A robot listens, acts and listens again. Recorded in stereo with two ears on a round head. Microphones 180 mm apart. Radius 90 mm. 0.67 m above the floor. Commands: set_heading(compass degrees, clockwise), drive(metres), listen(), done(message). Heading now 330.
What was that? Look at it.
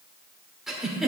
set_heading(300)
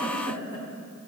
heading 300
set_heading(150)
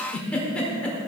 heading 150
done("Found it: a giggle, straight ahead.")